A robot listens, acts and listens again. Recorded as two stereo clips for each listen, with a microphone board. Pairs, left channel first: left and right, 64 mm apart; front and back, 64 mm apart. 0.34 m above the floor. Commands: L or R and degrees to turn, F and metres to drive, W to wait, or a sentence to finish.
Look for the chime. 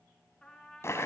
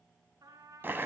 W
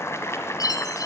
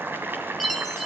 L90
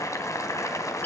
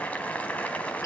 L30
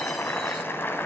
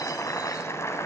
W
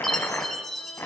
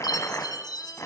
Facing the chime.